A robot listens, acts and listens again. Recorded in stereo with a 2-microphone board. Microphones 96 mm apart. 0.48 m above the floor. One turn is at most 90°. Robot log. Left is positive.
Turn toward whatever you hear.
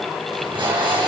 note: The tape being pulled: about 55° right or 125° right.
cmd yaw -55
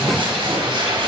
note: So it is at 65° right.
cmd yaw -65
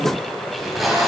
end: Found it: tape being pulled, straight ahead, 2 to 4 m away.